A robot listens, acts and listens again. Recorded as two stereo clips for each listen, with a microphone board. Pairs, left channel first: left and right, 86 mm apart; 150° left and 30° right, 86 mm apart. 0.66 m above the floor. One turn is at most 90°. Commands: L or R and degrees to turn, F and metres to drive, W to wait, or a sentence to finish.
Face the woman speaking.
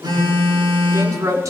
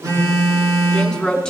R90
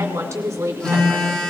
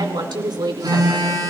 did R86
R45
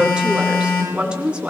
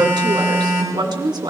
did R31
R15
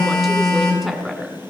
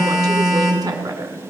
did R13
Found it: a woman speaking, straight ahead, 2 to 4 m away.